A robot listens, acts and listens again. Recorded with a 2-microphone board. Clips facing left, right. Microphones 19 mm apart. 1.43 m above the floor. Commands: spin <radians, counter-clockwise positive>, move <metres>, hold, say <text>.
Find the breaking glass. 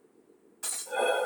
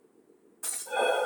spin 0.79
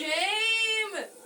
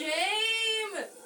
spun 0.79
hold
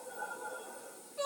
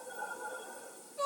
say I heard breaking glass, but can't make it out now. It was about straight ahead or 90° left.